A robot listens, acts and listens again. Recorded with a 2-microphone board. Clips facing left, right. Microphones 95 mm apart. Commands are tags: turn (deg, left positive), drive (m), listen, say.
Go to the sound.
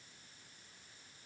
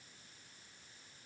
<listen/>
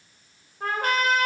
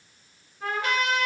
<turn deg="45"/>
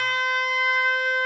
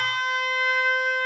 <drive m="1.0"/>
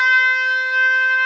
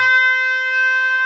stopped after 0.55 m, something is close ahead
<say>Something is in my way. I am facing the trumpet but have not reached it.</say>